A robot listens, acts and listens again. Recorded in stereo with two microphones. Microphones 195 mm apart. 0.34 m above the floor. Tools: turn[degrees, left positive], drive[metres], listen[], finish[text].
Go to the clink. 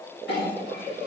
Thought: The clink: about 65° left or 115° left.
Action: turn[65]
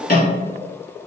Thought: So it is at 50° left.
Action: turn[50]
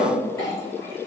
Thought: The clink is now 15° left.
Action: turn[15]
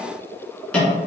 Action: drive[1.0]
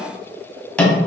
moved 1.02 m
Action: drive[1.0]
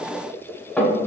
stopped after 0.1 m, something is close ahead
Action: finish[I am next to the clink.]